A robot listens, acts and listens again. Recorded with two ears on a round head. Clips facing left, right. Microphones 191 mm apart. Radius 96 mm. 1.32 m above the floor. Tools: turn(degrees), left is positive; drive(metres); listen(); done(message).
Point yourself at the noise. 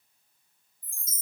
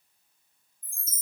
turn(degrees=30)
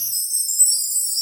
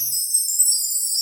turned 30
turn(degrees=-15)
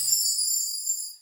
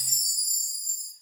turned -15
done("Found it: a chime, straight ahead, under 1 m away.")